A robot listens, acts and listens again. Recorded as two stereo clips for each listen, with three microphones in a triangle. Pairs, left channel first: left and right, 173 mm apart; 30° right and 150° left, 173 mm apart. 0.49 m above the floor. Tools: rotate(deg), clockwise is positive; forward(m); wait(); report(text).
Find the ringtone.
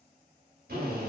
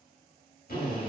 wait()
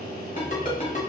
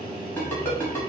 rotate(-45)
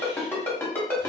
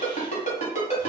rotate(-15)
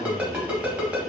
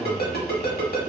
report("Found it: a ringtone, straight ahead, 1 to 2 m away.")